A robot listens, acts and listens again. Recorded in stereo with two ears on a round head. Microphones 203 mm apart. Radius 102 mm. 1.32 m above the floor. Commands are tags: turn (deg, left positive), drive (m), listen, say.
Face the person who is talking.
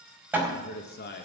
<turn deg="45"/>
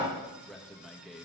<say>Facing the man speaking, 1 to 2 m away.</say>